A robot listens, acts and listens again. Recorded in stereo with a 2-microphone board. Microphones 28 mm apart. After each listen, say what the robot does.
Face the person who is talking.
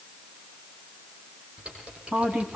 Turn 70° right.
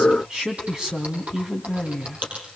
Turn 30° right.
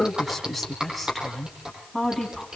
Facing the woman speaking.